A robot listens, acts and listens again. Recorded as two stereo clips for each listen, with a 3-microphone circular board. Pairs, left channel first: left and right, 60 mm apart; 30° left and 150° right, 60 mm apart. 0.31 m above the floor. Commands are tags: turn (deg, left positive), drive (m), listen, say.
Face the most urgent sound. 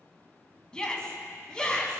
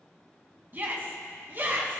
<turn deg="165"/>
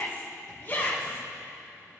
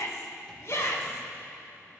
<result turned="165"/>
<turn deg="45"/>
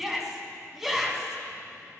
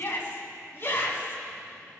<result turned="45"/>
<say>Found it: a shout, straight ahead, 2 to 4 m away.</say>